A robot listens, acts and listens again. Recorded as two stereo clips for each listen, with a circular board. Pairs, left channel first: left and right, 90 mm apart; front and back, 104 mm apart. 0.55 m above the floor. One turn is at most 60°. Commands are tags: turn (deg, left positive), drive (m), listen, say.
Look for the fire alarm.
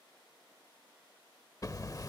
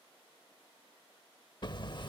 <listen/>
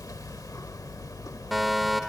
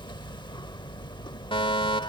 <say>Facing the fire alarm.</say>